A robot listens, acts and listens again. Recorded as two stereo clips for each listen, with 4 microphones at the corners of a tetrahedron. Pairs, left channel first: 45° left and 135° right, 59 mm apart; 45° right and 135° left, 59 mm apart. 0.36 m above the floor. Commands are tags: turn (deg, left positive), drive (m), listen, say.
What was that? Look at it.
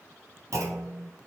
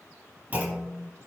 <turn deg="-165"/>
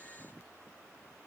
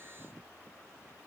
<say>I heard a clunk from this way, but can't make it out now.</say>